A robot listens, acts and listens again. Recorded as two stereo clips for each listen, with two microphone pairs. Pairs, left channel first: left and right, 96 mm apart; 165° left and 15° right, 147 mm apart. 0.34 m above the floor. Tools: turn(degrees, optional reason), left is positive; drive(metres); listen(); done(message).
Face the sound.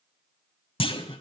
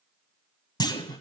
turn(degrees=105, reason="The clunk: 105° left.")
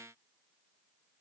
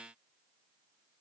done("Facing where the clunk came from. I can't hear it now.")